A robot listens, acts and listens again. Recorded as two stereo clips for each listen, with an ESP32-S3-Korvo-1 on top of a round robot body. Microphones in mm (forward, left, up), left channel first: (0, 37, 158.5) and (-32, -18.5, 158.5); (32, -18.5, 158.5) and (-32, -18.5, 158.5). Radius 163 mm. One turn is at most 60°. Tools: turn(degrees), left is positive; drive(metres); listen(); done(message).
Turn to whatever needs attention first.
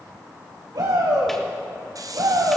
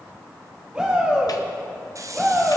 turn(degrees=-60)
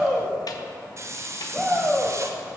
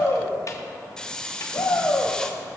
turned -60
turn(degrees=-40)
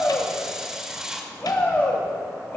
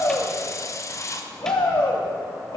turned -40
done("Facing the shout, 2 to 4 m away.")